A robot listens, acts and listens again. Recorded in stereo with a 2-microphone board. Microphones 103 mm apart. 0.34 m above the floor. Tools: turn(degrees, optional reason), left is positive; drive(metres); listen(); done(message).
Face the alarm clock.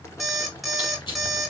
turn(degrees=30)
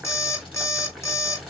turn(degrees=150, reason="So it is at 150° left.")
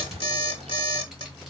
turn(degrees=55, reason="The alarm clock is now 55° left.")
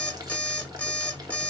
turn(degrees=15, reason="The alarm clock is now 15° left.")
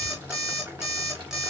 done("Found it: an alarm clock, straight ahead, 1 to 2 m away.")